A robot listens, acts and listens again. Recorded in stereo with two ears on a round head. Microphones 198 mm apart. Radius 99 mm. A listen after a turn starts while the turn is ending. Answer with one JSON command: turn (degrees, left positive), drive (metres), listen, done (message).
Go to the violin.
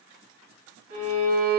{"turn": -65}
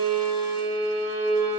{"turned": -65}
{"turn": -10}
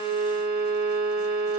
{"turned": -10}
{"drive": 1.0}
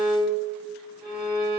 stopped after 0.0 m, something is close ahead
{"done": "Blocked. The violin is further on, straight ahead."}